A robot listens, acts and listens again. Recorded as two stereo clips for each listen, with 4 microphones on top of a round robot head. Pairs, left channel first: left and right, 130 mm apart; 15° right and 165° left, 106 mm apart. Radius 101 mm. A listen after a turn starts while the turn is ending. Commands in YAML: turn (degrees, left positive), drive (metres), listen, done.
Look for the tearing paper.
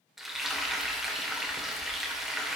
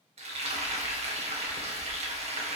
listen: true
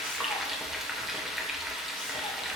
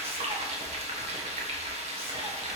listen: true
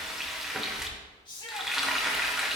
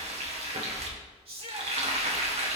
done: "I can't make out tearing paper, only a shout and frying."